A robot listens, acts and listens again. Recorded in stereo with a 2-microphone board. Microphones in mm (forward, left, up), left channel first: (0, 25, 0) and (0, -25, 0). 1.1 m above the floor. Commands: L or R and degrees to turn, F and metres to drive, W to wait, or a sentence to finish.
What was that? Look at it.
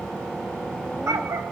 R90
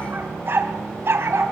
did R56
R50
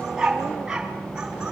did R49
R10
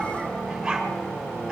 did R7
R10
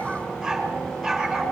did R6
Found it: a dog barking, straight ahead, over 4 m away.